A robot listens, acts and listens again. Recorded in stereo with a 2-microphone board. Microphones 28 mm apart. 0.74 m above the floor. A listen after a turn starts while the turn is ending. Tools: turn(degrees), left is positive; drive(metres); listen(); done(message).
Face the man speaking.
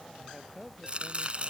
turn(degrees=30)
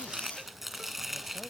listen()
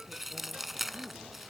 listen()
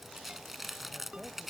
done("I heard a man speaking, but can't make it out now. It was about 20° right or 140° left.")